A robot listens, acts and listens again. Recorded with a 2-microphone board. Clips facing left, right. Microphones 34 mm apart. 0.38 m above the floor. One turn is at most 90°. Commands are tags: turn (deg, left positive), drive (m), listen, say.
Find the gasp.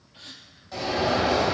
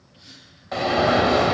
<turn deg="55"/>
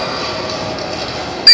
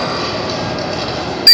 <listen/>
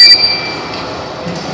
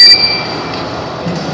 <say>I heard a gasp, but can't make it out now. It was about straight ahead or 70° left.</say>